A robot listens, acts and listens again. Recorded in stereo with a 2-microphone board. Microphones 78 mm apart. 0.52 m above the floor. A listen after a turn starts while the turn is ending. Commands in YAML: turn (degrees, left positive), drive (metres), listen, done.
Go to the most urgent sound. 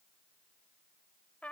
listen: true
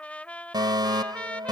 turn: -65
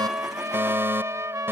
turn: -30
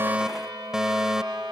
drive: 1.0
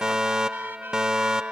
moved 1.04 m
turn: -10
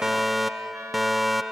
drive: 1.0
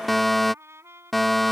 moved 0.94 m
drive: 1.0
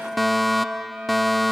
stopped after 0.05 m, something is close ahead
done: "I am next to the fire alarm."